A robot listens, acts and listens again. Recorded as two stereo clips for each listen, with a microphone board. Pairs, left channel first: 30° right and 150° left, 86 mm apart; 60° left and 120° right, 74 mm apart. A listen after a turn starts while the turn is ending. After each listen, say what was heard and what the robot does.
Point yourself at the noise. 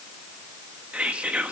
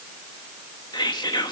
The whispering: 75° left. Turn 75° left.
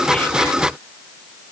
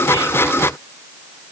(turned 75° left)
Keep listening.
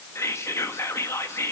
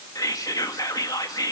The whispering is now 25° left. Turn 25° left.
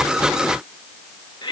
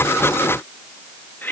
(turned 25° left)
Found it: whispering, straight ahead.